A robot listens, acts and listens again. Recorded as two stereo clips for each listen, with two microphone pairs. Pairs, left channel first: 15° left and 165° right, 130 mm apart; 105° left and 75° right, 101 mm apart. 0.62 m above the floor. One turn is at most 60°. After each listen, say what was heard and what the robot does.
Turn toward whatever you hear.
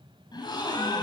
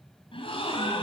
The gasp: 70° left. Turn 60° left.
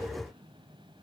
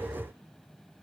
Nothing new. It was at 10° left. Turn 10° left.
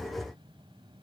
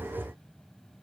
Facing where the gasp came from. I can't hear it now.